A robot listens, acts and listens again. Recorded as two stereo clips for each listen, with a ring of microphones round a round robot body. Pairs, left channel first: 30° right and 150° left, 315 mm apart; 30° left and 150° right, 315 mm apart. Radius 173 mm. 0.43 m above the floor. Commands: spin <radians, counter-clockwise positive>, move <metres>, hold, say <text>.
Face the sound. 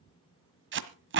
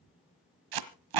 spin -2.71
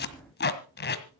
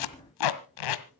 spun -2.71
spin 0.52
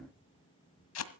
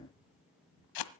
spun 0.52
spin 0.17
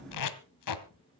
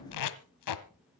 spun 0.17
say Facing the tape being pulled.